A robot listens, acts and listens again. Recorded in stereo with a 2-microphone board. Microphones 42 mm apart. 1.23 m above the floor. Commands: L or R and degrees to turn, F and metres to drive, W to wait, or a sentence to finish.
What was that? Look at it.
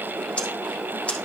L30
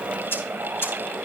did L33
L120
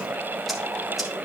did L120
W
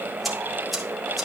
Facing the ticking, 1 to 2 m away.